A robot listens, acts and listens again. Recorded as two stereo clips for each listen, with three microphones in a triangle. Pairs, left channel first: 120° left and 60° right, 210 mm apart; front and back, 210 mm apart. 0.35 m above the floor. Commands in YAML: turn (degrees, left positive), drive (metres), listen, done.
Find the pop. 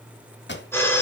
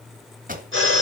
turn: 135
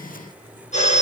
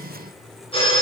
done: "I heard a pop from this way, but can't make it out now."